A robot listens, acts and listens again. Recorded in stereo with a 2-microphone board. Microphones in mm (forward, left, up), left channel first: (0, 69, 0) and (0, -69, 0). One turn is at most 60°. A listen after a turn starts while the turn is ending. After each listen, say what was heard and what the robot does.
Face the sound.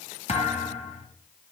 The thud: about 55° left or 125° left. Turn 55° left.
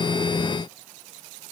Keep listening.
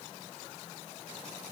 I heard a thud, but can't make it out now. It was about straight ahead or 70° left.